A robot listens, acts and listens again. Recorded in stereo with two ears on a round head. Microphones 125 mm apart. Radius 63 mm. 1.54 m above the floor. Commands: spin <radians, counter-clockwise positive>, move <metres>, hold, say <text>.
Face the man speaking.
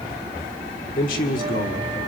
spin 1.57
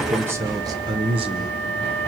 spin -0.70
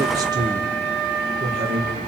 spin -0.79
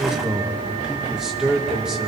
say Facing the man speaking, 2 to 4 m away.